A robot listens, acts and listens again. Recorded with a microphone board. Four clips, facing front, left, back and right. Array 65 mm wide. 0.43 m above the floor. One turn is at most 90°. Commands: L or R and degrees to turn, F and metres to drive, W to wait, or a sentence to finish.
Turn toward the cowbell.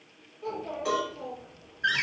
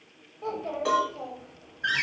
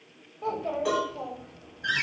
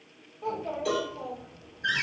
L90
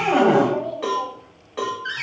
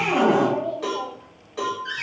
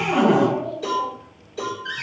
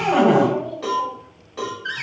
Found it: a cowbell, straight ahead.